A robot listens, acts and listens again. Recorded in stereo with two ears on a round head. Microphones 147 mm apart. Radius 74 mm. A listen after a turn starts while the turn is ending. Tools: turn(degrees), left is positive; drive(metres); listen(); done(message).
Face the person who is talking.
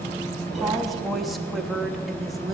turn(degrees=30)
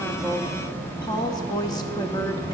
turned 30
turn(degrees=150)
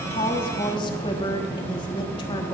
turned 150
turn(degrees=35)
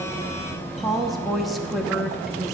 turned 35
done("Found it: a woman speaking, straight ahead, 1 to 2 m away.")